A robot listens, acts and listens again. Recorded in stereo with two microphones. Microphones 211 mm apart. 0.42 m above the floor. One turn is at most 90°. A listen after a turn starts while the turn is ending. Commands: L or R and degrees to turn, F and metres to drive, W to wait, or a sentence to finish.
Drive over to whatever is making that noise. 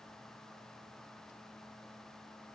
W
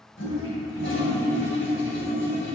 L70
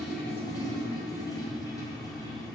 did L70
L20
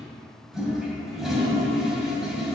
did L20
F1.0
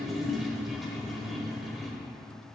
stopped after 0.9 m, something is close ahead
Arrived at the toilet flushing, straight ahead.